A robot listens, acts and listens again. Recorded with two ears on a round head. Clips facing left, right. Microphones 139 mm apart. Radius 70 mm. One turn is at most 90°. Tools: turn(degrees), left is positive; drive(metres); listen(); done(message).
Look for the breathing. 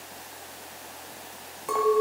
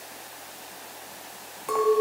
listen()
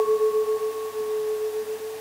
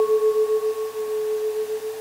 listen()
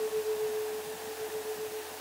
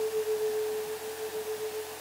done("I can't make out breathing to turn to.")